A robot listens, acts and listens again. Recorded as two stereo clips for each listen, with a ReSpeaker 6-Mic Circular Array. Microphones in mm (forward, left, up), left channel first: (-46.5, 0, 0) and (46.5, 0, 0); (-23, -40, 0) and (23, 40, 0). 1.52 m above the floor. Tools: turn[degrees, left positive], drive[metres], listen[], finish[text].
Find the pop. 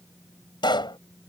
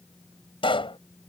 Thought: The pop: 145° right.
Action: turn[-145]
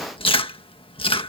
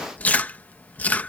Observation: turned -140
Action: finish[I heard a pop from this way, but can't make it out now.]